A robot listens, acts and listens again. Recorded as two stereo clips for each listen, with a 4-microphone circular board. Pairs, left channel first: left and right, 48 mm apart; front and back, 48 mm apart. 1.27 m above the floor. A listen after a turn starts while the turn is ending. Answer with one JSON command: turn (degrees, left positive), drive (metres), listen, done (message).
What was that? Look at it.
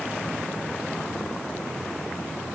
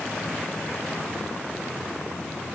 {"listen": true}
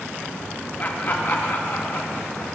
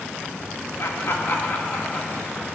{"turn": 55}
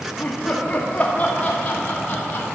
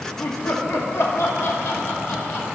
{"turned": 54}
{"turn": 35}
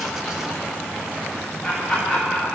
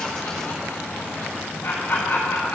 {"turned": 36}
{"done": "Found it: laughter, straight ahead, 2 to 4 m away."}